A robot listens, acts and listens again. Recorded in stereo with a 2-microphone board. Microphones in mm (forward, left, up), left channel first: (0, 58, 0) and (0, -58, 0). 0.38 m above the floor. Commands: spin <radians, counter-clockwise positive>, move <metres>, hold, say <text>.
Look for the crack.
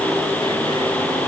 hold
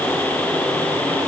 hold
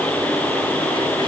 say I can't make out a crack.